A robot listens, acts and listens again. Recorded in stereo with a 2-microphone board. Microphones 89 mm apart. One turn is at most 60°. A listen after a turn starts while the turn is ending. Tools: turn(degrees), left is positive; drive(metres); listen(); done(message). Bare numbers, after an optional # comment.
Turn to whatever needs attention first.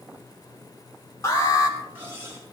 # The alarm: about 40° left or 140° left.
turn(40)
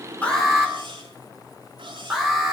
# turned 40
done("Facing the alarm, over 4 m away.")